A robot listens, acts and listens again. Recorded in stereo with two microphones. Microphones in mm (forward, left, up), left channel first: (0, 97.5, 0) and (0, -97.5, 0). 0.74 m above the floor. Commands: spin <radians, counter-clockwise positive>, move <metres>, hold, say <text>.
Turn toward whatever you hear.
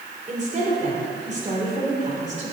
spin -0.70
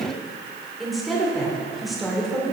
say Facing the woman speaking, 2 to 4 m away.